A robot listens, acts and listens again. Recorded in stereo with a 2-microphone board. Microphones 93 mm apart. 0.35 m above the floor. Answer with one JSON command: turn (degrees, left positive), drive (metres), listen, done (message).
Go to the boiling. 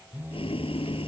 {"turn": 90}
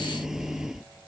{"drive": 1.0}
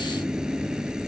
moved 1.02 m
{"turn": -10}
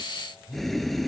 {"drive": 1.0}
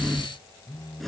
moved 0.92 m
{"drive": 1.0}
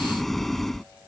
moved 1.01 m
{"drive": 1.0}
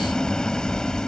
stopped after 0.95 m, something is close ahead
{"turn": 10}
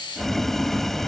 {"done": "Arrived at the boiling, straight ahead."}